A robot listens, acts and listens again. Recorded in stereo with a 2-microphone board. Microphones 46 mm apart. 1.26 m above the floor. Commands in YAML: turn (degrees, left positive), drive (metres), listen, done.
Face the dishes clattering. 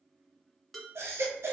turn: 30
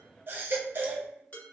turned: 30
turn: 140
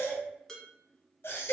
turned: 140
turn: 15
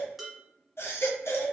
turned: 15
done: "Found it: dishes clattering, straight ahead."